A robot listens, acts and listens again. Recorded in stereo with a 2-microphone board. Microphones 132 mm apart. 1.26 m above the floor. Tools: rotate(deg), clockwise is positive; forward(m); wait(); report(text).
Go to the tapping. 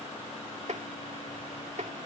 rotate(65)
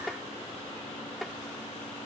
forward(1.0)
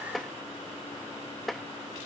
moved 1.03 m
forward(1.0)
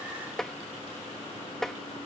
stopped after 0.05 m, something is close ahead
report("I am next to the tapping.")